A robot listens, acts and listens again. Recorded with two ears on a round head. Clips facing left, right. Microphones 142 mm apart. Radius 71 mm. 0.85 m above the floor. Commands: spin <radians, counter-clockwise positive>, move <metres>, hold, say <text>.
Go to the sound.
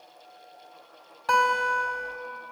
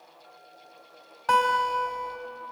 spin 0.52
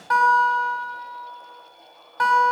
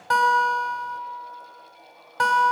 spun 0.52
spin -0.52
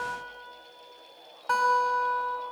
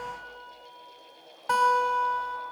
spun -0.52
spin -0.17
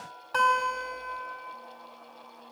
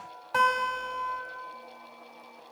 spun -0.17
move 1.0
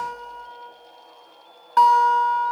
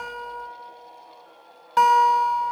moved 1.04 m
spin -0.17
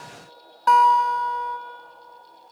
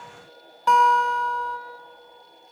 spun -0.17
move 1.0
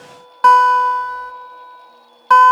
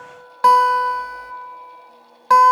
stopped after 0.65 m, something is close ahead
say I am next to the guitar.